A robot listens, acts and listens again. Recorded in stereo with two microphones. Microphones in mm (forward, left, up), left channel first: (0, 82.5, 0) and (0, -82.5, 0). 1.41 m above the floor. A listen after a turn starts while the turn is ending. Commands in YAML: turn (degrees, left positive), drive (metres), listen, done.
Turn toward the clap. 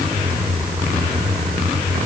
listen: true
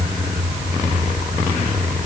listen: true
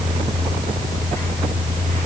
done: "I can't make out a clap."